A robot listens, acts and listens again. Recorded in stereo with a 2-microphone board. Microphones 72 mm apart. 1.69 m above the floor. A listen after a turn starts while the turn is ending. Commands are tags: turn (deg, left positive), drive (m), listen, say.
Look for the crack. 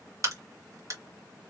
<turn deg="-50"/>
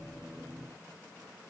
<listen/>
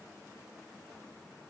<say>I heard a crack, but can't make it out now. It was about straight ahead or 80° right.</say>